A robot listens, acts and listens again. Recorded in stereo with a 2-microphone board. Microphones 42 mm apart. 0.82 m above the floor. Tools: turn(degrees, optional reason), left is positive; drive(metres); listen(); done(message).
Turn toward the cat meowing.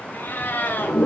turn(degrees=50, reason="The cat meowing: about 50° left or 130° left.")
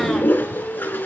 listen()
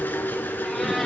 listen()
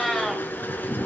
done("Facing the cat meowing, 2 to 4 m away.")